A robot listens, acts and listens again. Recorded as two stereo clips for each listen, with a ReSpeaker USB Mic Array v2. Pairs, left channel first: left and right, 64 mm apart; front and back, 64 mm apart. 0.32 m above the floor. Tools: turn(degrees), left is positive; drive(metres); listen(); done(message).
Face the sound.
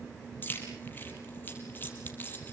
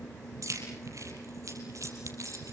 turn(degrees=150)
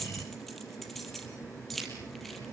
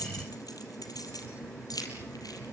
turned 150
done("Found it: keys jangling, straight ahead, over 4 m away.")